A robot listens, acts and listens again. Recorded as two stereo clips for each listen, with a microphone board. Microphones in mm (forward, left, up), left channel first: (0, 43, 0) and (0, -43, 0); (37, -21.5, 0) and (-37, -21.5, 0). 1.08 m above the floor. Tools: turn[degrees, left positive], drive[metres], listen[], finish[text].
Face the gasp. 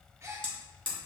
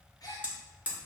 Thought: The gasp: 35° right.
Action: turn[-35]
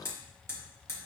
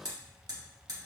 Action: finish[Facing where the gasp came from. I can't hear it now.]